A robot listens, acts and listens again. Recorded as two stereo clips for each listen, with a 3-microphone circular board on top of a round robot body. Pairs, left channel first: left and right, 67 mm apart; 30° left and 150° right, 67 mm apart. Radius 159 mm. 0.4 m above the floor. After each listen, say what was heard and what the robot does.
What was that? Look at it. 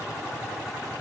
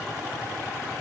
Keep listening.
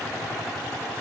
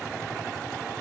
Keep listening.
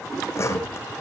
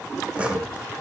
The sawing: 135° left. Turn 135° left.
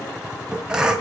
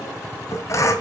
The sawing is now 10° right. Turn 10° right.
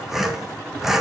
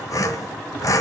Facing the sawing, 2 to 4 m away.